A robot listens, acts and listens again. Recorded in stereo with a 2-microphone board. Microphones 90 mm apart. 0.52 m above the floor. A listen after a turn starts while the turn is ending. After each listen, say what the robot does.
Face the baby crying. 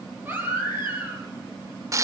Turn 20° right.
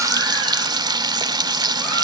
Keep listening.
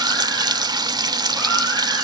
Keep listening.
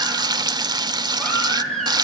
Facing the baby crying.